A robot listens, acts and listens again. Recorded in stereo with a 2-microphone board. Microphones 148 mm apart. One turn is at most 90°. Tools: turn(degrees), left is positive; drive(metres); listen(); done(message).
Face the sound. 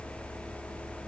listen()
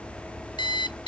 turn(degrees=30)
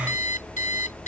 turn(degrees=90)
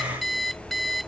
done("Facing the alarm clock.")